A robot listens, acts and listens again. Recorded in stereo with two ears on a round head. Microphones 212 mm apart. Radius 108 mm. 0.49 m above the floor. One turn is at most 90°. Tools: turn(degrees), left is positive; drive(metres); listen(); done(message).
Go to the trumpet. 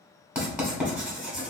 listen()
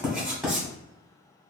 listen()
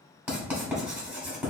done("I can't make out a trumpet to turn to.")